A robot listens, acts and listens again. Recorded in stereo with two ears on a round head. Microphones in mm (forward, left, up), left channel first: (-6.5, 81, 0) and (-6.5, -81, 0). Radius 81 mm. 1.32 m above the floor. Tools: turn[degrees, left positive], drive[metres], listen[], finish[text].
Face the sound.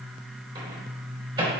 Thought: The microwave: about 30° right or 150° right.
Action: turn[-30]
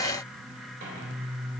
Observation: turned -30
Action: listen[]
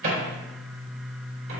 Thought: So it is at 120° right.
Action: turn[-120]
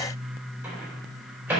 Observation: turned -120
Thought: The microwave is now 10° right.
Action: turn[-10]
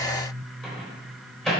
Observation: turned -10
Action: finish[Found it: a microwave, straight ahead, 2 to 4 m away.]